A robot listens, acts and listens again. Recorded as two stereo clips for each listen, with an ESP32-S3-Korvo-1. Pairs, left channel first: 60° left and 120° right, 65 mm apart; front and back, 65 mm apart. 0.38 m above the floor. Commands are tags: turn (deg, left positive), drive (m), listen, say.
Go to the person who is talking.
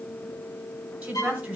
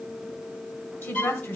<turn deg="-50"/>
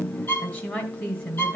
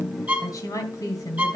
<drive m="1.0"/>
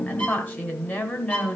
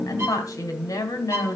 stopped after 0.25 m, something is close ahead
<say>Blocked. The woman speaking is further on, straight ahead.</say>